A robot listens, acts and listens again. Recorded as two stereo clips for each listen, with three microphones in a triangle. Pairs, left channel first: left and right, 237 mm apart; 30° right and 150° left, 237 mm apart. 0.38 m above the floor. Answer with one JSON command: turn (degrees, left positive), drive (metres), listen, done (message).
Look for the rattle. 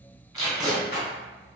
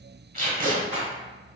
{"turn": 95}
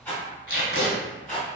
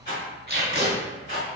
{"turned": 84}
{"turn": 10}
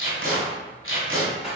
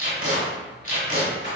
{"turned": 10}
{"done": "Facing the rattle, 1 to 2 m away."}